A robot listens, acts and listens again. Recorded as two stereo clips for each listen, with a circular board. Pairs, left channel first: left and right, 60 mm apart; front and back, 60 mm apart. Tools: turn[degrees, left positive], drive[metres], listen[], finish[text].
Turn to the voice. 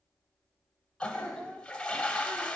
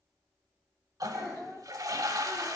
Action: finish[Found it: a child speaking, straight ahead, 2 to 4 m away.]